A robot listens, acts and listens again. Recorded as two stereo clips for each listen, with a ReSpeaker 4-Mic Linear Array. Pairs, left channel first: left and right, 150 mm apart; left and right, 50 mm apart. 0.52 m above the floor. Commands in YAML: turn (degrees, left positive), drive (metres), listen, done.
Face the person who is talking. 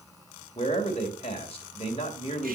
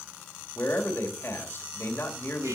turn: 40
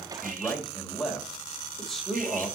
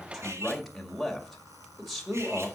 done: "Facing the man speaking, 1 to 2 m away."